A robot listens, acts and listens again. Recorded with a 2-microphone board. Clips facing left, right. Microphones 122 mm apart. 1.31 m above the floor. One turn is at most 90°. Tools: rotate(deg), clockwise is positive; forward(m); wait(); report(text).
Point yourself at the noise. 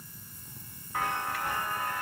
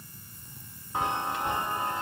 rotate(20)
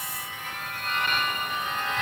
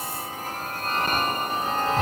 rotate(90)
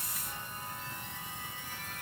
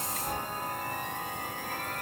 rotate(65)
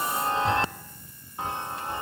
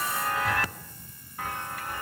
rotate(-25)
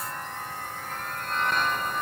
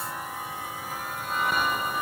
report("Facing the chime.")